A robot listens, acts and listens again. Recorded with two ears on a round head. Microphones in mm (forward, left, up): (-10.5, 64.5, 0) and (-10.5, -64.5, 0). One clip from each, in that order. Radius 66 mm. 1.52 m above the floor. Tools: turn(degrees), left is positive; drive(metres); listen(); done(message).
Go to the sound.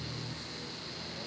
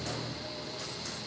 listen()
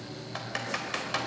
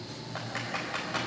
turn(degrees=75)
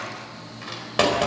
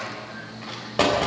turn(degrees=30)
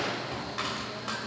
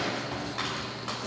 drive(metres=1.0)
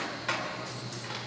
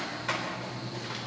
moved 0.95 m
drive(metres=1.0)
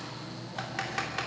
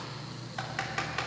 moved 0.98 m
drive(metres=1.0)
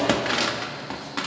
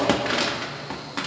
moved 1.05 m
drive(metres=1.0)
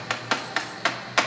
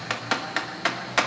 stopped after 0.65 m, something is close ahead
turn(degrees=10)
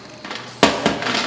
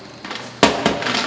done("Arrived at the typing on a keyboard, straight ahead.")